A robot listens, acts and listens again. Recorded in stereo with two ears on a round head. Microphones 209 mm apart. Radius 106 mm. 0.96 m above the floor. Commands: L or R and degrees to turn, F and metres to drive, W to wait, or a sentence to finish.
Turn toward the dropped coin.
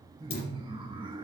L45
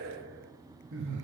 W
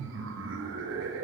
I heard a dropped coin, but can't make it out now. It was about straight ahead or 90° left.